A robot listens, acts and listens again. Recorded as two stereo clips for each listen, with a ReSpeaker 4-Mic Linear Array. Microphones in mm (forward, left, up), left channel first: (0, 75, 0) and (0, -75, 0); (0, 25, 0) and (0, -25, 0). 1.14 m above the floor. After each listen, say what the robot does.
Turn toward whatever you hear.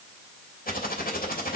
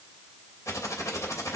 Turn 90° left.
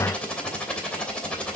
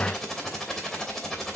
Turn 10° left.
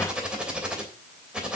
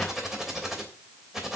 Found it: typing on a keyboard, straight ahead.